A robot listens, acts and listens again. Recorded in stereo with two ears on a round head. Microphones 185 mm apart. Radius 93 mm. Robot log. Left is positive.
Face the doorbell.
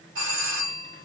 note: The doorbell: about 60° right or 120° right.
cmd yaw -60
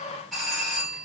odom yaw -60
end: Found it: a doorbell, straight ahead.